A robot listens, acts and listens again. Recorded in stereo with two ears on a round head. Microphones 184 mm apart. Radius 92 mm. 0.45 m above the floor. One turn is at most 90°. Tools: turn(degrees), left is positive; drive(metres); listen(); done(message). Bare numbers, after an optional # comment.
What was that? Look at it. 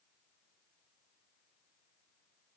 listen()
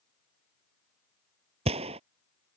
# The gunshot: about 30° right or 150° right.
turn(-30)
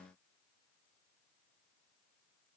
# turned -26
listen()
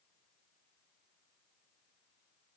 done("I heard a gunshot, but can't make it out now. It was about 5° right or 125° right.")